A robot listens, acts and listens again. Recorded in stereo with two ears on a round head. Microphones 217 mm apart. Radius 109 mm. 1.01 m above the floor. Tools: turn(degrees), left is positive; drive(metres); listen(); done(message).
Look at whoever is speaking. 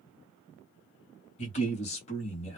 turn(degrees=30)
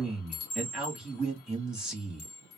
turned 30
done("Found it: a man speaking, straight ahead, 1 to 2 m away.")